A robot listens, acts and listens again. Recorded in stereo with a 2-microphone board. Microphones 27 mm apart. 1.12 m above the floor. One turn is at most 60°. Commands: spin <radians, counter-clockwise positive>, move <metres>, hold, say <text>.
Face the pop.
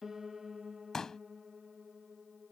spin 0.35
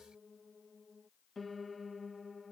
hold
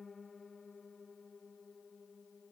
say I heard a pop, but can't make it out now. It was about straight ahead or 140° left.